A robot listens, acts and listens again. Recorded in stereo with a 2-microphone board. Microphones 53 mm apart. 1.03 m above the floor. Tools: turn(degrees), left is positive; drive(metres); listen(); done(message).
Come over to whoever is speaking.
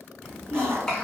turn(degrees=30)
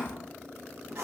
turn(degrees=140)
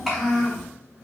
drive(metres=1.0)
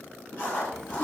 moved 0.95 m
listen()
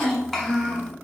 drive(metres=1.0)
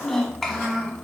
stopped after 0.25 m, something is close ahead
done("Arrived at the child speaking, straight ahead.")